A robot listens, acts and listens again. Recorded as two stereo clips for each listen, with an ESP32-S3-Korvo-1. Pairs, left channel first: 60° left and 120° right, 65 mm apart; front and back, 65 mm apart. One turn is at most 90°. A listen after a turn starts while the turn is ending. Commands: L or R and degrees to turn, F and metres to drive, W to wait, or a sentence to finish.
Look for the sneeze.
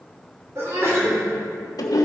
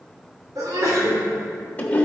R90
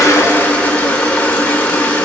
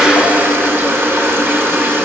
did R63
R90
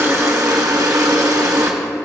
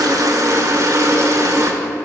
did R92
I heard a sneeze from this way, but can't make it out now.